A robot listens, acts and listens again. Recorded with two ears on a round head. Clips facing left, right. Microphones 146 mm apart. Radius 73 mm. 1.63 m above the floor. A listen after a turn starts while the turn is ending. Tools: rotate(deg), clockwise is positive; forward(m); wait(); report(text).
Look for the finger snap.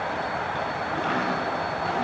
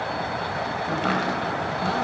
wait()
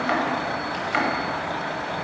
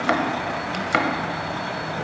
wait()
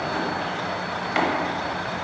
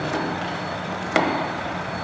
report("I can't make out a finger snap to turn to.")